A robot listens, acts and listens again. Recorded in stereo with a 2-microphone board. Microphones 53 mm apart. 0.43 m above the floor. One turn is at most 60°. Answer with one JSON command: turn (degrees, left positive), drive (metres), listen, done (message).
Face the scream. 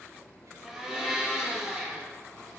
{"listen": true}
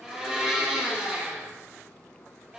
{"listen": true}
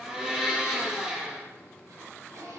{"done": "I can't make out a scream to turn to."}